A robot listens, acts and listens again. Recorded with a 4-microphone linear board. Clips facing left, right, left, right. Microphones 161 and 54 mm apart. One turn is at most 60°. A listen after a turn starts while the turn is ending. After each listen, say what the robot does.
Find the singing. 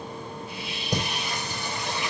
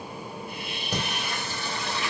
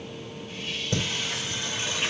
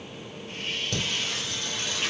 Turn 15° left.
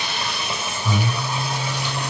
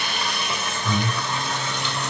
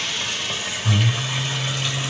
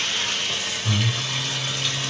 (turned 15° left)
Turn 30° left.
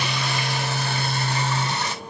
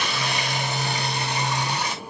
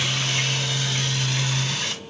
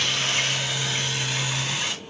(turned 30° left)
Turn 10° right.
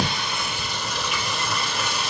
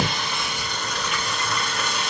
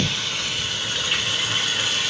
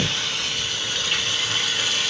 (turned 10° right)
Found it: singing, straight ahead, 2 to 4 m away.